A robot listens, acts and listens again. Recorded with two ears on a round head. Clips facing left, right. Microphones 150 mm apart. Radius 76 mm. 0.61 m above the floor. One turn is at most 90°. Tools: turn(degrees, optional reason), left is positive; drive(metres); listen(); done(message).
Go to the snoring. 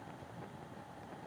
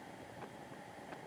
listen()
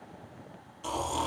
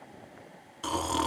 turn(degrees=-90)
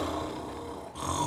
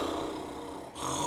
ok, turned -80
drive(metres=1.0)
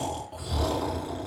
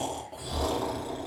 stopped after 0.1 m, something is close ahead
done("Blocked. The snoring is further on, straight ahead.")